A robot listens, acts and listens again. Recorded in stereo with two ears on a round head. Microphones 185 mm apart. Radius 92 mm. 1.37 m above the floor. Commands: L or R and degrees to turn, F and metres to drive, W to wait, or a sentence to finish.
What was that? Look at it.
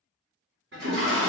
R55
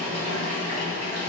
R40
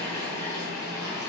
R20
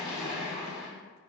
Found it: a toilet flushing, straight ahead, 1 to 2 m away.